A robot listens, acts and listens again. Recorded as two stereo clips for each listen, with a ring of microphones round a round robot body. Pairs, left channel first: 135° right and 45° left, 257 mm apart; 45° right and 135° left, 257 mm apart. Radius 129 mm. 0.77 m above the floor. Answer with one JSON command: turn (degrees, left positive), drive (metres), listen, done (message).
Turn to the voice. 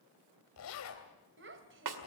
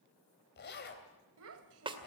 {"turn": 95}
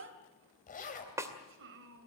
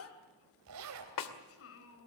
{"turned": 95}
{"done": "Found it: a child speaking, straight ahead, 2 to 4 m away."}